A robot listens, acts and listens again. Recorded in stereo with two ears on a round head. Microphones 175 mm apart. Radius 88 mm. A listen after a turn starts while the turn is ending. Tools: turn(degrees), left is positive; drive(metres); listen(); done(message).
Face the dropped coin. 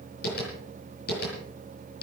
listen()
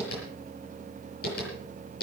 listen()
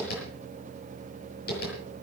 done("I can't make out a dropped coin to turn to.")